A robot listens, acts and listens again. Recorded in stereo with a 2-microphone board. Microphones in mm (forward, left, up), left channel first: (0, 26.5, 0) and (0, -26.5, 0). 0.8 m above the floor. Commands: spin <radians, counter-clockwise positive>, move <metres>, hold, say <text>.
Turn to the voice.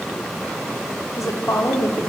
spin 1.22
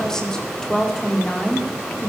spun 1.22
spin 0.17
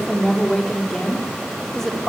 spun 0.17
say Facing the woman speaking.